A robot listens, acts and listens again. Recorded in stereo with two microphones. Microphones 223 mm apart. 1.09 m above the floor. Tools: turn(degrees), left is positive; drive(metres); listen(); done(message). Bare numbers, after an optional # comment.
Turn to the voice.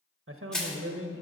# The man speaking: about 70° right or 110° right.
turn(-70)
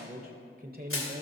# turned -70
# So it is at 40° right.
turn(-40)
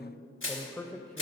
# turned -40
done("Facing the man speaking, under 1 m away.")